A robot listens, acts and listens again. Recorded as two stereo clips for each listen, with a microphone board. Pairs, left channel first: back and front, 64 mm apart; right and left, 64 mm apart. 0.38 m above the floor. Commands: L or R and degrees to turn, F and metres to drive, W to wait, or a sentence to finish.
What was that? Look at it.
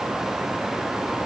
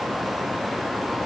W
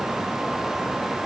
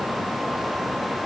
W
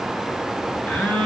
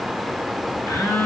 R115
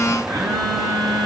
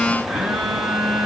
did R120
Facing the phone buzzing, 1 to 2 m away.